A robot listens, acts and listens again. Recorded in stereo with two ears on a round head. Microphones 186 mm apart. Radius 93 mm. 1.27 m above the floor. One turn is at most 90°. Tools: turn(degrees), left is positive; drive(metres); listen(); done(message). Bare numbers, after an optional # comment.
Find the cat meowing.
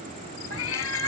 turn(90)
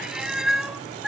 done("Facing the cat meowing.")